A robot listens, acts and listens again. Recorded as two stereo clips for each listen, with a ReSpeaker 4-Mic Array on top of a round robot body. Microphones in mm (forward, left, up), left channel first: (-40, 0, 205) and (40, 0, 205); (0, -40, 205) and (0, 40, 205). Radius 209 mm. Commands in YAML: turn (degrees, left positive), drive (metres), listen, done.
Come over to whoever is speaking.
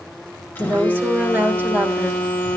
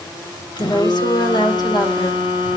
turn: -65
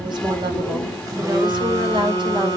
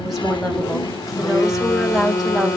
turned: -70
drive: 1.0
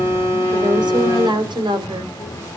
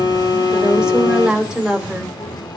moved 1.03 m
turn: 10
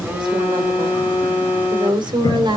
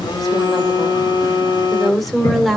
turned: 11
drive: 1.0
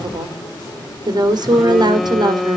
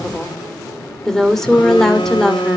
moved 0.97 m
drive: 1.0
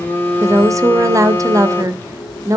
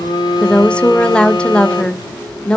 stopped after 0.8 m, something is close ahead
turn: -20
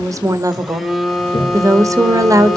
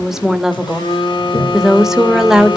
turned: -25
turn: 10
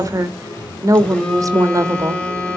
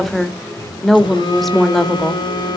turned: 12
done: "I am next to the woman speaking."